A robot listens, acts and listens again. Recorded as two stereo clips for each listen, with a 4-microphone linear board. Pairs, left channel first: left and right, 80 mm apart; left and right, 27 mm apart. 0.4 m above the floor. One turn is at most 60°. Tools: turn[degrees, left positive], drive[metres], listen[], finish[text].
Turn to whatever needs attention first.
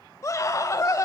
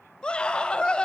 Thought: The scream: about 40° left or 140° left.
Action: turn[40]
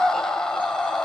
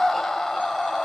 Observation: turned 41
Thought: So it is at 10° left.
Action: turn[10]
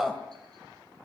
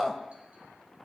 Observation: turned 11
Action: finish[Facing the scream, 2 to 4 m away.]